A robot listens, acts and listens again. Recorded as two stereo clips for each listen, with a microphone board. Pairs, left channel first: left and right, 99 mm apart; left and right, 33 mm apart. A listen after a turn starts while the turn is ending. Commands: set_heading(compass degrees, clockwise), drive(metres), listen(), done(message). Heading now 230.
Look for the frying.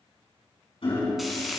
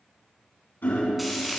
set_heading(200)
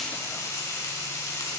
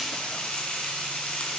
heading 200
set_heading(50)
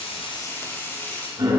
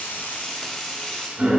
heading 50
set_heading(25)
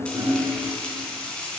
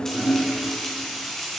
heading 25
set_heading(15)
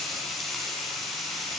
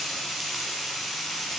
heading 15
done("Found it: frying, straight ahead, 2 to 4 m away.")